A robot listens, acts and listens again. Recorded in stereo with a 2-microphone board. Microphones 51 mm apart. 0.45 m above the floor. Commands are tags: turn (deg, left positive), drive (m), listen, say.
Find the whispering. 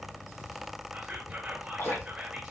<turn deg="-20"/>
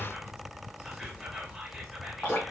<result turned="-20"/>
<say>Found it: whispering, straight ahead, 1 to 2 m away.</say>